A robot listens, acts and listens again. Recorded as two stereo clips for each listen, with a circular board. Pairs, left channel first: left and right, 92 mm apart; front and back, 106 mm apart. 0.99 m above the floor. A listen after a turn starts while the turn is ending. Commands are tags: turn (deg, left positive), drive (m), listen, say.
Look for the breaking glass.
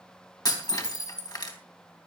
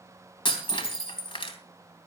<turn deg="40"/>
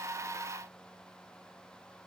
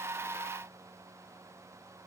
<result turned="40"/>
<say>I heard breaking glass from this way, but can't make it out now.</say>